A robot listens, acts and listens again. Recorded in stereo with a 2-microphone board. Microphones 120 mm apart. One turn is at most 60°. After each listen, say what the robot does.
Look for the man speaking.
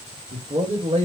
Turn 60° right.
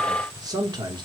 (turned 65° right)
Turn 40° right.
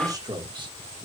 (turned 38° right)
Turn 40° right.
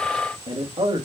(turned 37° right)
Turn 50° right.
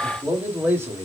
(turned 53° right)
Turn 20° right.
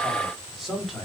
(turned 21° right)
Facing the man speaking, 2 to 4 m away.